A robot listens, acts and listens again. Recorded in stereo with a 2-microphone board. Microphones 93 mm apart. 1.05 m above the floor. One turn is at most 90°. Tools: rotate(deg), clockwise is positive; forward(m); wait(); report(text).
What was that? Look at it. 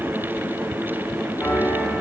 rotate(-20)
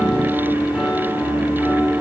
report("Found it: a piano, straight ahead, 1 to 2 m away.")